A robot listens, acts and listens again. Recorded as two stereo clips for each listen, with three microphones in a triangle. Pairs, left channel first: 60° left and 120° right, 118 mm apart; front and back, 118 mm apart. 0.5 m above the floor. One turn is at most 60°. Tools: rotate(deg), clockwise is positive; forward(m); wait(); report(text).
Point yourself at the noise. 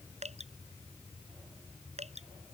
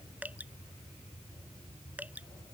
rotate(60)
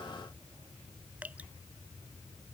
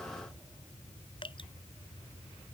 rotate(45)
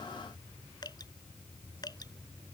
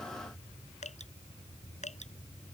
report("Facing the dripping.")